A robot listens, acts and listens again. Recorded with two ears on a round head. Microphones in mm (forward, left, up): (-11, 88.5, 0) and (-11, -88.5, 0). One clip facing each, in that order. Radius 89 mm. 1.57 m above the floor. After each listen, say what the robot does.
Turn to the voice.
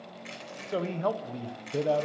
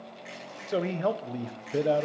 Turn 20° right.
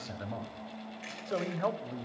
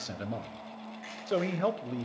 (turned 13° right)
Turn 145° right.
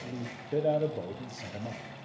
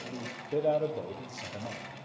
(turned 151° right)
Facing the man speaking.